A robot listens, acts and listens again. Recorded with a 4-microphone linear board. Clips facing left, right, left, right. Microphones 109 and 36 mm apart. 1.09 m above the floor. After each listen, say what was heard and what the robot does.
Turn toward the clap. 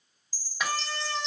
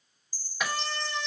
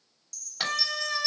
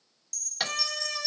Turn 30° left.
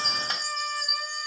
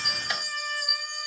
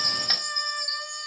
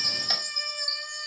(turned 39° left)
Keep listening.
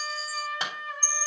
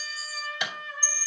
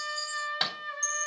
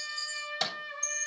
So it is at 140° left. Turn 140° left.
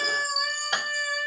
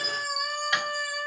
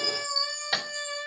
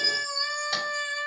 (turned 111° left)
Nothing new. It was at 30° left. Turn 30° left.
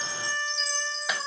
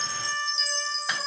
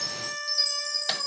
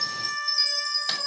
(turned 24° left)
Keep listening.
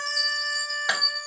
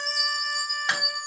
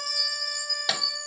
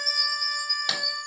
Found it: a clap, straight ahead.